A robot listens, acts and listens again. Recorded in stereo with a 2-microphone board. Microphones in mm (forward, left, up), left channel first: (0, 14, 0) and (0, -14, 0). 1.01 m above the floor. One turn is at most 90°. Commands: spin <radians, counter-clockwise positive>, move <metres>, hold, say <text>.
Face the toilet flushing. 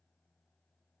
hold
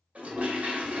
spin -0.96
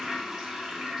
spin -0.26
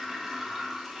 say Found it: a toilet flushing, straight ahead.